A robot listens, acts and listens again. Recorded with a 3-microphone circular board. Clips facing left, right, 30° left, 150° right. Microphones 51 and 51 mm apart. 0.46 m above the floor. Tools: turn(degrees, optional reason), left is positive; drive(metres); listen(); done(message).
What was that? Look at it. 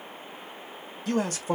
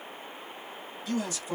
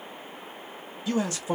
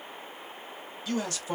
turn(degrees=90, reason="The man speaking: 90° left.")
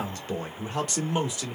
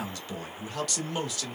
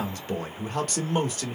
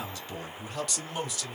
turn(degrees=25, reason="The man speaking is now 25° left.")
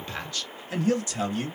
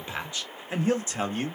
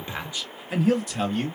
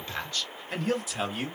turn(degrees=-80, reason="The man speaking is now 80° right.")
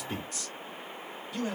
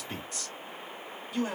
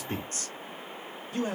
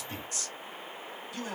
turn(degrees=-15, reason="The man speaking is now 15° right.")
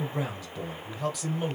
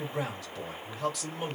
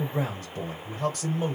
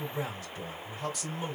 done("Facing the man speaking.")